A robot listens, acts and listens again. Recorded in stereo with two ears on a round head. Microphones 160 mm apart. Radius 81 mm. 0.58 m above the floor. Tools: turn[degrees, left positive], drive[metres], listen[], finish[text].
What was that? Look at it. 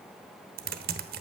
Thought: The typing on a keyboard: about 55° right or 125° right.
Action: turn[-55]
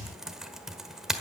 Action: finish[Found it: typing on a keyboard, straight ahead.]